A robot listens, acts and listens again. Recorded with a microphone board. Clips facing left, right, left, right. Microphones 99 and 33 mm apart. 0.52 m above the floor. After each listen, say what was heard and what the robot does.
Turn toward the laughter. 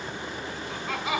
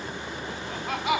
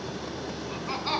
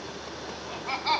The laughter: about 60° right or 120° right. Turn 60° right.
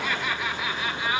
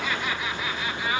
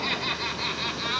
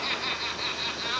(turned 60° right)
Facing the laughter, over 4 m away.